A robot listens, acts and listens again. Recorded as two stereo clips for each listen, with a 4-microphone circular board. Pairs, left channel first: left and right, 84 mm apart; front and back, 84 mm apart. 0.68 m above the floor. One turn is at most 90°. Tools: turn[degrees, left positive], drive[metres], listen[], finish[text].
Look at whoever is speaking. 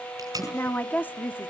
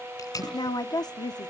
Thought: The woman speaking: 25° left.
Action: turn[25]
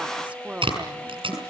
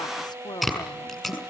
Thought: The woman speaking is now 20° right.
Action: turn[-20]
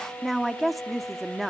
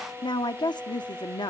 Action: finish[Found it: a woman speaking, straight ahead.]